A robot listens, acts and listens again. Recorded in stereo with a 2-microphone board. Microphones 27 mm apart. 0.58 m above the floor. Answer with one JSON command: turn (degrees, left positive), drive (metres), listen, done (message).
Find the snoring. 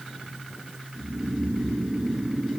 {"turn": -40}
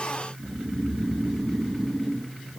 {"done": "Facing the snoring."}